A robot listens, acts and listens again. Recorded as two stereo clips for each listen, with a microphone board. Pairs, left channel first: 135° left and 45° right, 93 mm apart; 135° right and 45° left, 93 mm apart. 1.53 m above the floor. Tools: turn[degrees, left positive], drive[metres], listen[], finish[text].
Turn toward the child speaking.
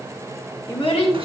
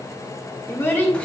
Thought: The child speaking: 155° left.
Action: turn[155]
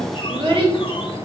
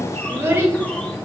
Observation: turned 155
Thought: The child speaking is now 20° right.
Action: turn[-20]
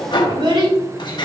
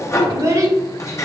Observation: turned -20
Thought: The child speaking is now 10° right.
Action: turn[-10]
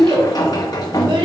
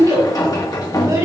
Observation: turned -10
Thought: The child speaking is now 10° right.
Action: turn[-10]
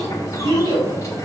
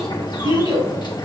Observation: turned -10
Action: finish[Facing the child speaking.]